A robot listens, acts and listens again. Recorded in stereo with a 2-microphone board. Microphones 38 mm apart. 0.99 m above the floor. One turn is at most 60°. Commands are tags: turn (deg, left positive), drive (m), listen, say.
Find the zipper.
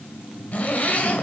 <turn deg="40"/>
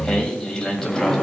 <say>Facing the zipper, 1 to 2 m away.</say>